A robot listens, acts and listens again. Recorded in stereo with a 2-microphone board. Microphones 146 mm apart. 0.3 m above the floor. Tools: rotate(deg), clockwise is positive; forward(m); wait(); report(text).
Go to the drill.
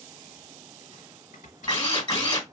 rotate(-30)
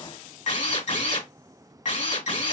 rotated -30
rotate(-115)
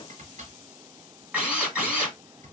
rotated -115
rotate(10)
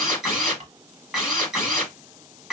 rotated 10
forward(1.0)
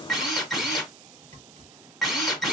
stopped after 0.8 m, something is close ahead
report("Arrived at the drill, straight ahead.")